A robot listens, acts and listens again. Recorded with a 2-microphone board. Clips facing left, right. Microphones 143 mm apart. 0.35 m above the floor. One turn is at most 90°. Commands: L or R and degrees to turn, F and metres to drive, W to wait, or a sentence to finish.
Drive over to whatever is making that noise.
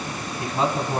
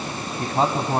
R45
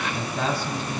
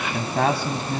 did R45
R85
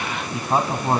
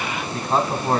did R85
L15
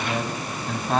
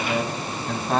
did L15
F1.0
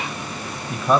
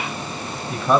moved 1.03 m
F1.0
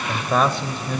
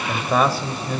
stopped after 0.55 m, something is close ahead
I am next to the man speaking.